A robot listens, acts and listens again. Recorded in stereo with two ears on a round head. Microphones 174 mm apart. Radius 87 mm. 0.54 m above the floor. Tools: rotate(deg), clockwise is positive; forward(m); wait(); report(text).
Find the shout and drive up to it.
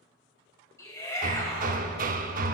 rotate(-15)
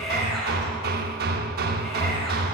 forward(1.0)
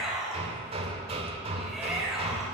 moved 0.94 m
forward(1.0)
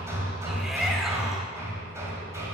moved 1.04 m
wait()
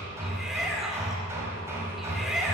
forward(1.0)
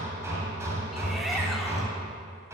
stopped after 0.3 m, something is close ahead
wait()
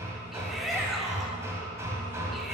report("I am next to the shout.")